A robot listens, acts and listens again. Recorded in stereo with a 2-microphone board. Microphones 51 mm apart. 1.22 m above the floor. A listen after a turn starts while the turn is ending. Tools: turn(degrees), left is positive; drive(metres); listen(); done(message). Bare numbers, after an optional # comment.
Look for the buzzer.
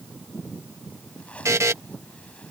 turn(-90)
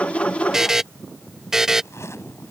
# So it is at 10° right.
turn(-10)
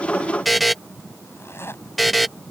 done("Found it: a buzzer, straight ahead.")